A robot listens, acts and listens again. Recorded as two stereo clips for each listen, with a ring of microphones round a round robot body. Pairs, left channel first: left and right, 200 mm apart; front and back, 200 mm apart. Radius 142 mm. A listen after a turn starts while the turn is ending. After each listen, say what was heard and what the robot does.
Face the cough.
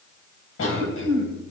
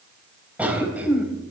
The cough: 95° left. Turn 95° left.
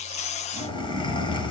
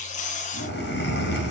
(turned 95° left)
The cough is now 25° left. Turn 25° left.
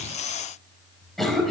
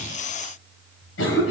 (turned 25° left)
Facing the cough.